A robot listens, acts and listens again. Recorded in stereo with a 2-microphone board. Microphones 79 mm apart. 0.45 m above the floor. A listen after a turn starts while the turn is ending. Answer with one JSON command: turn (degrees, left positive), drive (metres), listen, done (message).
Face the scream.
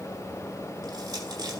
{"listen": true}
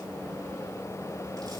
{"listen": true}
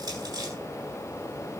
{"done": "I can't make out a scream, only crushing."}